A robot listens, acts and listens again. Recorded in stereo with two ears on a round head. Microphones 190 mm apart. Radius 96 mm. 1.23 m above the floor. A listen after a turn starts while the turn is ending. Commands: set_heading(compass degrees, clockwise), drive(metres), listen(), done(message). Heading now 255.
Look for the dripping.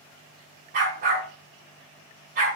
listen()
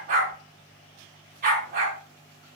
listen()
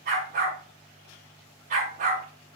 done("I can't make out dripping to turn to.")